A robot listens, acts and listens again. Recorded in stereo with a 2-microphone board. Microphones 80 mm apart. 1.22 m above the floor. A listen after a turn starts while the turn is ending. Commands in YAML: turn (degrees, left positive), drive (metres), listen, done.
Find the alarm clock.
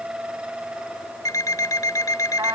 turn: 45
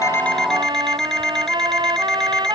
done: "Found it: an alarm clock, straight ahead."